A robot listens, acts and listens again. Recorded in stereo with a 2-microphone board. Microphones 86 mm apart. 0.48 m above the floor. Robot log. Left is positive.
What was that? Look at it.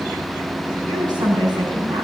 note: The woman speaking: about 55° right or 125° right.
cmd yaw -55
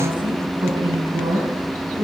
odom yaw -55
note: So it is at 70° right.
cmd yaw -70
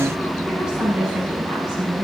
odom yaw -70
note: The woman speaking is now 10° right.
cmd yaw -10
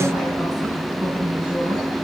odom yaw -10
end: Found it: a woman speaking, straight ahead.